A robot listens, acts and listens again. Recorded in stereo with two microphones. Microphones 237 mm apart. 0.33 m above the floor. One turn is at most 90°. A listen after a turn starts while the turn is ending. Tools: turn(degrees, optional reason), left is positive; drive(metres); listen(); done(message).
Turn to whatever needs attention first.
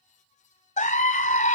turn(degrees=30, reason="The scream: about 30° left or 150° left.")
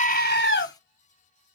turn(degrees=90, reason="So it is at 110° left.")
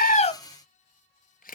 turn(degrees=20, reason="Nothing new. It was at 20° left.")
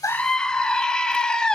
done("Found it: a scream, straight ahead, 1 to 2 m away.")